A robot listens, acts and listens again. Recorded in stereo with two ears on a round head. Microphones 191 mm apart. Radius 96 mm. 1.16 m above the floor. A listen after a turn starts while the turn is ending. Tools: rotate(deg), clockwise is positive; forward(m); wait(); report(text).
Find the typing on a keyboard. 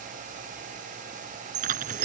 rotate(40)
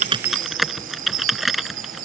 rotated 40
report("Found it: typing on a keyboard, straight ahead.")